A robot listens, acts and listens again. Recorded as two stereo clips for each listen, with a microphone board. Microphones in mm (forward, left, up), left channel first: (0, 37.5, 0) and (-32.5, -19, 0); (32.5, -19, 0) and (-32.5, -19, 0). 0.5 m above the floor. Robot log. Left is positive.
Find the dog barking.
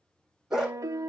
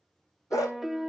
note: The dog barking: 35° right.
cmd yaw -35
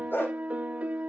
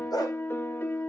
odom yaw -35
end: Facing the dog barking.